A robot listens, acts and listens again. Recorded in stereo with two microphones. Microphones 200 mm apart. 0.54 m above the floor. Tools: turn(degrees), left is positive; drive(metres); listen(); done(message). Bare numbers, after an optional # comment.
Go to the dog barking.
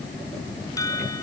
listen()
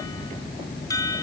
listen()
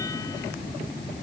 done("I can't make out a dog barking to turn to.")